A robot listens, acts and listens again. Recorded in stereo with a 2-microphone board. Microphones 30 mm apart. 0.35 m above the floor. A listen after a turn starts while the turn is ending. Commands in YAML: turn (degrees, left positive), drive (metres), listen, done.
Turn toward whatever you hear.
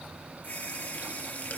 turn: 55
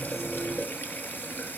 turn: 75
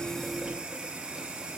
turn: -20
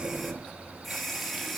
done: "Facing the running tap."